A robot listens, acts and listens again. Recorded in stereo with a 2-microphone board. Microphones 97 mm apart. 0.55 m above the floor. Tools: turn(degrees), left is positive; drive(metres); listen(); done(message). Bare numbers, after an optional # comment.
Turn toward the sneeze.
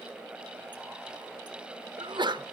# The sneeze: about 50° right or 130° right.
turn(-50)
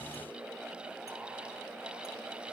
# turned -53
listen()
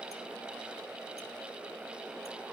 done("I heard a sneeze, but can't make it out now. It was about 5° left or 75° right.")